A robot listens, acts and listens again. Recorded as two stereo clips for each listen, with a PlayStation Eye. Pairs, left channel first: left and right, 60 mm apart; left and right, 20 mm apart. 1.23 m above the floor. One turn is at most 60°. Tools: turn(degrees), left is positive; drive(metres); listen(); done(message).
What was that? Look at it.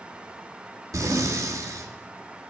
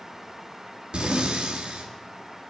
turn(degrees=-60)
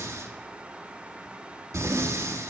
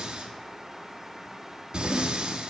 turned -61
turn(degrees=-55)
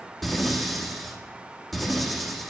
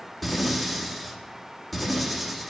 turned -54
done("Facing the breathing, 1 to 2 m away.")